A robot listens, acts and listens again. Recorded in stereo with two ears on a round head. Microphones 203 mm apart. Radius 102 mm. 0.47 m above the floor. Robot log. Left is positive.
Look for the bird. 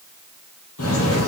cmd yaw +90
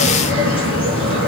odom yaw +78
note: So it is at 25° left.
cmd yaw +25
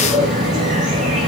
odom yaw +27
end: Facing the bird.